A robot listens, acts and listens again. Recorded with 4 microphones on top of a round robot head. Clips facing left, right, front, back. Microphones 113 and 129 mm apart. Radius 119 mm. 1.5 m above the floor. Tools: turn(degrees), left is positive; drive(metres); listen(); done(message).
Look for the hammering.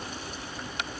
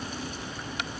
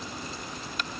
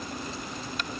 listen()
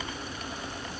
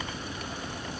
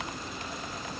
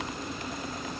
listen()
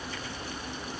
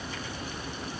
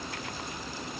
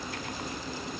done("I can't make out hammering to turn to.")